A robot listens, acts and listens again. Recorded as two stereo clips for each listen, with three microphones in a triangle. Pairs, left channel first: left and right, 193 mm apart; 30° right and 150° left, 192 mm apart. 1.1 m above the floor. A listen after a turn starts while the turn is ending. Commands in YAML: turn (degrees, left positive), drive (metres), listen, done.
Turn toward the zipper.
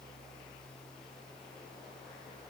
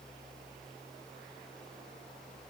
listen: true
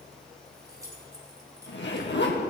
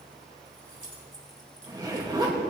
turn: 80
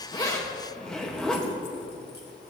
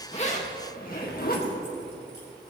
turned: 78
done: "Found it: a zipper, straight ahead."